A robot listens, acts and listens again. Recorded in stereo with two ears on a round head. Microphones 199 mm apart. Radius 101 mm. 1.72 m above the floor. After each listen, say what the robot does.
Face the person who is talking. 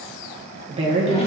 Turn 25° right.
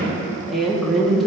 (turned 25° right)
Found it: a woman speaking, straight ahead.